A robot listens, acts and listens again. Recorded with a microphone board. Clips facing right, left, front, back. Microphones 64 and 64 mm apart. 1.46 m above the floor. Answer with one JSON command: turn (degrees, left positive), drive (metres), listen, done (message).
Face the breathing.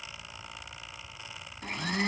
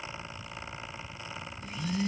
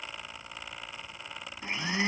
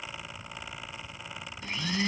{"listen": true}
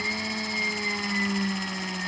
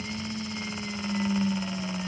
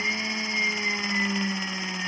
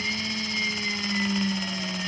{"listen": true}
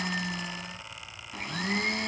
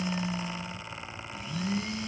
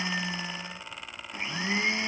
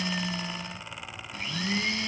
{"done": "I can't make out breathing to turn to."}